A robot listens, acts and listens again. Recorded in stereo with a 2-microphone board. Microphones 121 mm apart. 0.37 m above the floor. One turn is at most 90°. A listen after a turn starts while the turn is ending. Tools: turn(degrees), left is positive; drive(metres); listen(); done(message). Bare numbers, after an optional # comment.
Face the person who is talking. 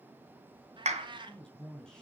turn(30)
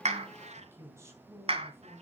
# So it is at 25° right.
turn(-25)
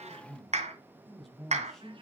done("Facing the man speaking.")